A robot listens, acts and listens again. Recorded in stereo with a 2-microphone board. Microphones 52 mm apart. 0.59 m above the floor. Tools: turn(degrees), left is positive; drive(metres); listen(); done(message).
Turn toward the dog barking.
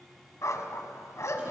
turn(degrees=65)
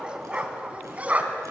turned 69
turn(degrees=-30)
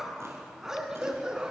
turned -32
turn(degrees=-15)
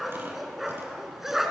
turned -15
done("Facing the dog barking.")